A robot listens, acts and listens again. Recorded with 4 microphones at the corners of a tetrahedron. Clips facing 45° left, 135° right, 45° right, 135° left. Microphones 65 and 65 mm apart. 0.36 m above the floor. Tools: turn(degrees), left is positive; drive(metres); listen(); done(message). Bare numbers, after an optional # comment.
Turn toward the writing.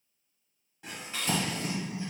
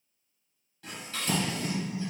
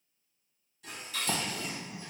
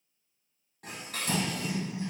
# The writing: 15° right.
turn(-15)
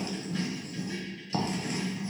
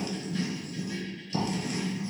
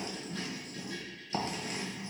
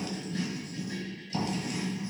done("Found it: writing, straight ahead, 1 to 2 m away.")